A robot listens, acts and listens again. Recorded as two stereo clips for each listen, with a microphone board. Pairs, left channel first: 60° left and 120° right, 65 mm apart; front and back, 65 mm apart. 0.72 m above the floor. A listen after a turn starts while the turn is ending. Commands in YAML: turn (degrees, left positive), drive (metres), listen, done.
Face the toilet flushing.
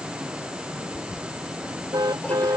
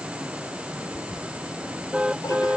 done: "Facing the toilet flushing."